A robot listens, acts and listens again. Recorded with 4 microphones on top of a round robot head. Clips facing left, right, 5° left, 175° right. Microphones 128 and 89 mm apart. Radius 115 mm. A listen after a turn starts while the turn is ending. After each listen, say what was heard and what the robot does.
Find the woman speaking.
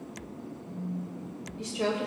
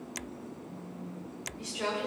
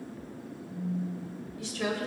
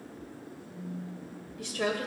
The woman speaking: 145° left. Turn 145° left.
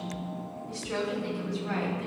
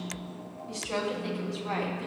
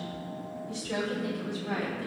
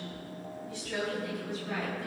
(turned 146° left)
The woman speaking is now 30° right. Turn 30° right.
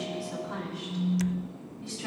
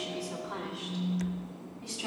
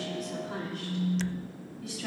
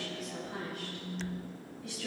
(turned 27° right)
The woman speaking is now 10° right. Turn 10° right.
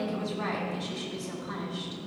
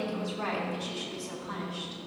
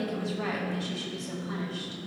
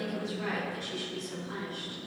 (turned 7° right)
Facing the woman speaking.